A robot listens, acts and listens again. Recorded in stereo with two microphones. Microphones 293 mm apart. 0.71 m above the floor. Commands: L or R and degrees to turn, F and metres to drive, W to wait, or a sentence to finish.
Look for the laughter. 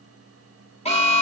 W
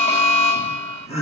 L20
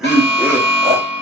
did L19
R10
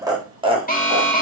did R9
R20
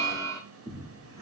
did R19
R20
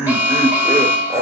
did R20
Facing the laughter.